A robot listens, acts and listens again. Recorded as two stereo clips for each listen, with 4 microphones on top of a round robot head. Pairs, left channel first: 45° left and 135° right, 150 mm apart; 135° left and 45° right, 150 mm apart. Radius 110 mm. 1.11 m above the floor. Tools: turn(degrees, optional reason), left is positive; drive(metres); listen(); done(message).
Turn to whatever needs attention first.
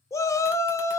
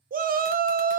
turn(degrees=-25, reason="The shout: 25° right.")
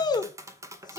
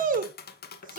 turn(degrees=-15, reason="The shout is now 15° right.")
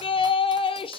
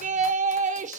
turn(degrees=-10, reason="The shout is now 10° right.")
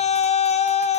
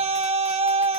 done("Facing the shout, under 1 m away.")